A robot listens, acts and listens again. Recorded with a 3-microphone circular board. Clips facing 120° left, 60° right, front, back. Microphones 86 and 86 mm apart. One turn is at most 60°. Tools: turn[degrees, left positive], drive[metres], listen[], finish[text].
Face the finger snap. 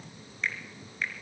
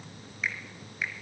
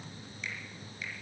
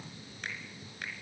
Thought: The finger snap: 145° right.
Action: turn[-60]
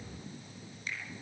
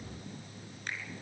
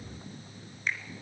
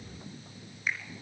Thought: The finger snap is now 95° right.
Action: turn[-60]
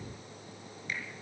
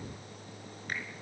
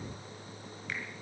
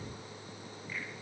Thought: The finger snap is now 15° right.
Action: turn[-15]
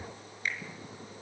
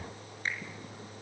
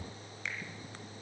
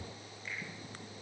Action: finish[Facing the finger snap.]